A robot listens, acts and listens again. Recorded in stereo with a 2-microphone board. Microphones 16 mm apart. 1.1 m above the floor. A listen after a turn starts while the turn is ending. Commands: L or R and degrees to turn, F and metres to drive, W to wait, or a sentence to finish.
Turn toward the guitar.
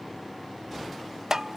W
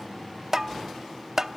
W
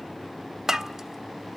I can't make out a guitar, only tapping.